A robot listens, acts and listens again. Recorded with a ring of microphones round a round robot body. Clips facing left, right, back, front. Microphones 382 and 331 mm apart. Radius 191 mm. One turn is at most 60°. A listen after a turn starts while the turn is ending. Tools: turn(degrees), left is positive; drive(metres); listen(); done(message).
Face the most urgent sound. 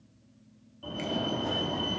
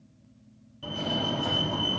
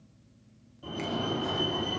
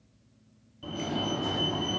turn(degrees=-60)
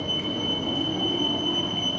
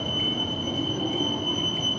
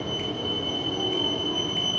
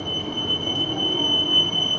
turn(degrees=10)
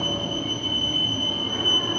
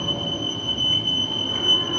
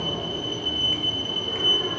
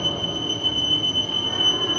done("Facing the fire alarm, 2 to 4 m away.")